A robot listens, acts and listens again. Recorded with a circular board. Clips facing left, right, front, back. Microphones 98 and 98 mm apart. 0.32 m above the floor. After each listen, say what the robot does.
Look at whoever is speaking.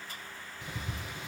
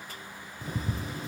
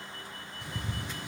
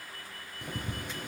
Keep listening.
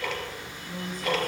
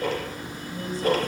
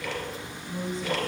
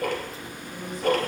Turn 60° left.
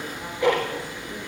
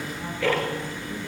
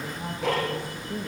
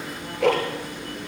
Keep listening.
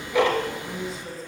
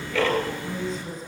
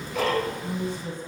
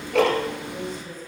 Facing the woman speaking.